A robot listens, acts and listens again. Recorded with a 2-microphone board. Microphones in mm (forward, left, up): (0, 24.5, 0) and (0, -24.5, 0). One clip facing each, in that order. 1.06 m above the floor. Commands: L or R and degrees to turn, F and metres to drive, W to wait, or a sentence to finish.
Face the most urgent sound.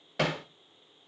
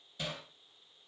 W
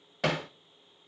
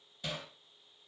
W
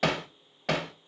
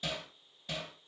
I can't make out anything urgent, only hammering.